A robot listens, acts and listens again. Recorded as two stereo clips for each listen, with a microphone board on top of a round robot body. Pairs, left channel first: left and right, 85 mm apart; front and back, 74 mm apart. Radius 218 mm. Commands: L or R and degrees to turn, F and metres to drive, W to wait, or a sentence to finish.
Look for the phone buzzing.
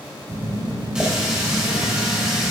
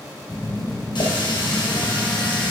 R70
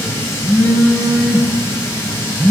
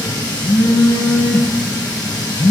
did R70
R35
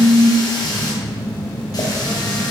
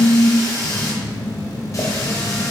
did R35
R15
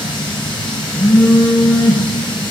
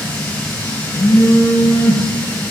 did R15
Facing the phone buzzing, under 1 m away.